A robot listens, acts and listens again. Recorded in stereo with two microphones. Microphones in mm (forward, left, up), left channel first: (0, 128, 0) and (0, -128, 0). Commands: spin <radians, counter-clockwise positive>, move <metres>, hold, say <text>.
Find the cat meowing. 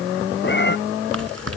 spin 0.79
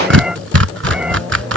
say Facing the cat meowing.